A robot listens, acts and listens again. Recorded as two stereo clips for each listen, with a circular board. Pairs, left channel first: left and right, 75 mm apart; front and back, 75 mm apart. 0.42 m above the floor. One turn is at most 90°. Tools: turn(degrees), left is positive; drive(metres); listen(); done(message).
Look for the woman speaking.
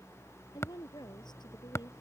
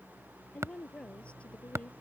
turn(degrees=75)
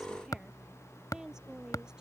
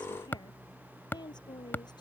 turn(degrees=-10)
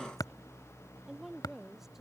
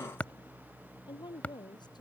done("Found it: a woman speaking, straight ahead.")